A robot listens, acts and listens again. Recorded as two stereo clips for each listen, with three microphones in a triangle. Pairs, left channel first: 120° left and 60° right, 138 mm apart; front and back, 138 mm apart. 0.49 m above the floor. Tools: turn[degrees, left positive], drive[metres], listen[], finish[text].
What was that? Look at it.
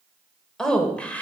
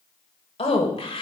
Thought: The woman speaking: 40° left.
Action: turn[40]
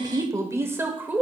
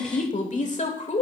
Thought: The woman speaking is now 15° left.
Action: turn[15]
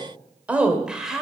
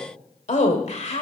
Thought: The woman speaking is now 25° left.
Action: turn[25]
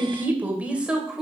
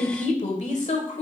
Thought: The woman speaking is now 25° left.
Action: turn[25]
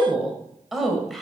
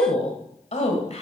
Thought: The woman speaking is now 30° left.
Action: turn[30]
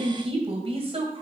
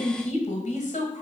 Thought: The woman speaking is now 20° right.
Action: turn[-20]
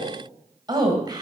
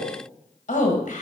Action: finish[Facing the woman speaking, 2 to 4 m away.]